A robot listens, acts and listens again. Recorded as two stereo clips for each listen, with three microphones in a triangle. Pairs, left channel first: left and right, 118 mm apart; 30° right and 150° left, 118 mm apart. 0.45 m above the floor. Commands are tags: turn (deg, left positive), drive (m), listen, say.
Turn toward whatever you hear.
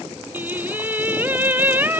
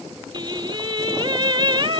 <turn deg="-160"/>
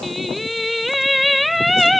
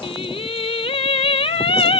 <say>Found it: singing, straight ahead.</say>